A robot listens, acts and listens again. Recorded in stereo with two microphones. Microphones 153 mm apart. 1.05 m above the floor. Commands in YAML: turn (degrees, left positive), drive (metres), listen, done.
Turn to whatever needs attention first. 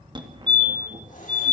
turn: -30
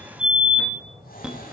done: "Facing the fire alarm."